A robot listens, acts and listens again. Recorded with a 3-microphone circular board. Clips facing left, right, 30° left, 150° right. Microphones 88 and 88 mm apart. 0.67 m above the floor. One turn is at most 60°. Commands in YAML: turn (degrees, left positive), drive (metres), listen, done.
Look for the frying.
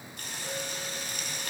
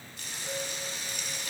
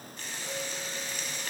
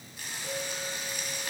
turn: 60
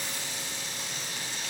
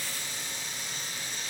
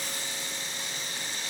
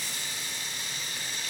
turn: 60
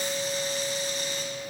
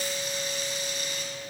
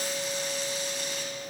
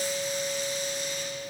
turn: 30
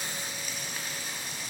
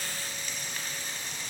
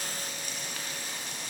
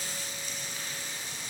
turn: 10
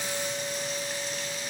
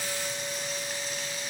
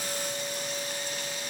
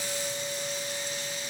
listen: true
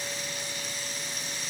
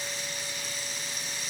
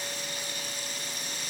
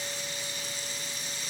done: "Facing the frying, 2 to 4 m away."